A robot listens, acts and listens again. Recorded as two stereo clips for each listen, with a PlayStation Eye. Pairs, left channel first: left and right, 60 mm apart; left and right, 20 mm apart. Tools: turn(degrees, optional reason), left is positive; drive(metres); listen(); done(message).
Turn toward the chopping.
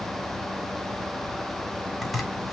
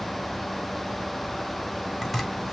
turn(degrees=30)
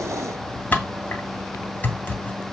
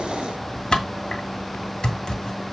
turn(degrees=150, reason="So it is at 150° left.")
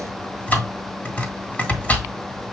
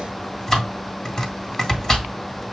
turn(degrees=30, reason="The chopping is now 30° left.")
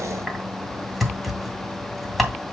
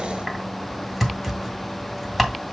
done("Facing the chopping.")